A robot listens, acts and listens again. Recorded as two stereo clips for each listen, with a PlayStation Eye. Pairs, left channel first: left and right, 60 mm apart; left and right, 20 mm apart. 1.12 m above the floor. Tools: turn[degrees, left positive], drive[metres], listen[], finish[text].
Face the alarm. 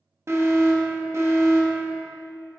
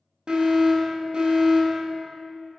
Thought: The alarm: about 50° right or 130° right.
Action: turn[-50]
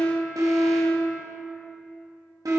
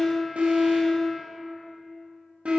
Thought: So it is at 80° right.
Action: turn[-80]
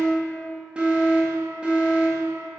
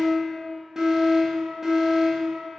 Thought: The alarm is now 20° right.
Action: turn[-20]
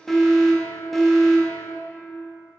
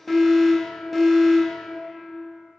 Action: finish[Found it: an alarm, straight ahead, 1 to 2 m away.]